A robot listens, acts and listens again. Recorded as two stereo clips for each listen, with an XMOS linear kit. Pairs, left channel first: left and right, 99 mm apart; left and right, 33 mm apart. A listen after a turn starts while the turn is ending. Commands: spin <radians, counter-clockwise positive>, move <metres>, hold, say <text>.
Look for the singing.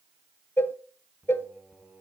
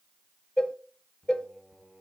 spin -0.52
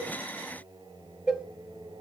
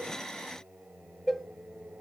spin -2.36
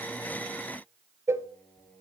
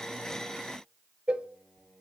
spin 0.26
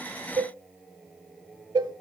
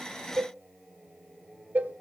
say Facing the singing.